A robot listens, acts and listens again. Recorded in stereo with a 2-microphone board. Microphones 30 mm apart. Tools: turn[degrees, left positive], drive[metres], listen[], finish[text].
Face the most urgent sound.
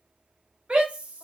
Thought: The shout: about 40° right or 140° right.
Action: turn[-40]
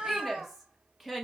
Action: finish[Found it: a shout, straight ahead.]